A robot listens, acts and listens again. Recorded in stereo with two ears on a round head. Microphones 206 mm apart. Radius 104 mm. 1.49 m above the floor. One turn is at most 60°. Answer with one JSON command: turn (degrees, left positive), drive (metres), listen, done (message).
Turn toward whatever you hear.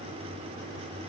{"listen": true}
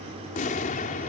{"turn": 35}
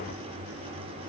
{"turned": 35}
{"listen": true}
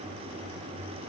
{"done": "I heard an explosion, but can't make it out now. It was about straight ahead or 110° left."}